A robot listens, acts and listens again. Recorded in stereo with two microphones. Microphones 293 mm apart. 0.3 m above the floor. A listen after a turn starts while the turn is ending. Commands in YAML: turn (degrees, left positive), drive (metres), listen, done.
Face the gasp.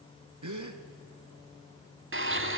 turn: -90
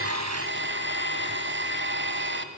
done: "Facing where the gasp came from. I can't hear it now."